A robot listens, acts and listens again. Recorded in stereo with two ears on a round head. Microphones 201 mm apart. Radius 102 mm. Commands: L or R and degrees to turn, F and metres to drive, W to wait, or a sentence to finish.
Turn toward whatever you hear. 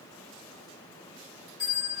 L35
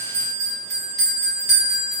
Facing the bell.